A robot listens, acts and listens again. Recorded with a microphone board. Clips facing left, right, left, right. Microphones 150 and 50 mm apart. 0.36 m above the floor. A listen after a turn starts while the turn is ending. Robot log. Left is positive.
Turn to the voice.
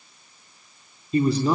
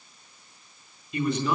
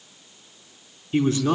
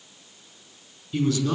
note: The man speaking: about 30° left or 150° left.
cmd yaw +30
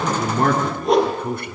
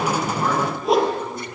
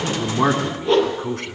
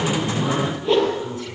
note: So it is at 115° left.
cmd yaw +115
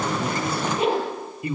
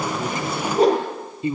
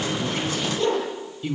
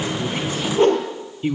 note: The man speaking is now 25° right.
cmd yaw -25
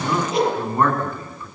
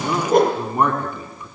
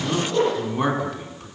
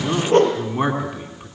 note: The man speaking is now 15° right.
cmd yaw -15
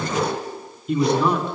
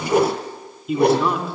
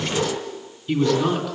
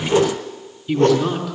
end: Facing the man speaking.